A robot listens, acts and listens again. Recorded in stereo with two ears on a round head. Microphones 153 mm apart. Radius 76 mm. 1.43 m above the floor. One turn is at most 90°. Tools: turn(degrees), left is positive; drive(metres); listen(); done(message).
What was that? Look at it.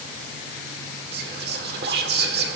turn(degrees=-65)
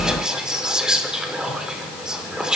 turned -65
done("Found it: whispering, straight ahead.")